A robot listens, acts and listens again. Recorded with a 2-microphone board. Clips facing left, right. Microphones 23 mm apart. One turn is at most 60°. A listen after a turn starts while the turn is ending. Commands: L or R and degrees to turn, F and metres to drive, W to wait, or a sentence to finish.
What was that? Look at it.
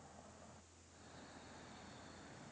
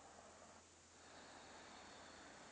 W
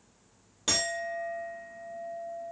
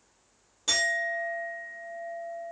L20
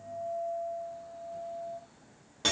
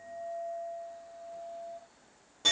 L60
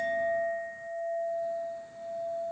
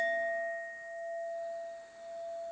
L60
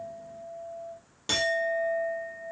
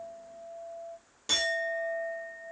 L20
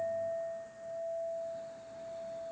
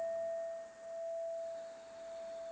Found it: a clink, straight ahead, 1 to 2 m away.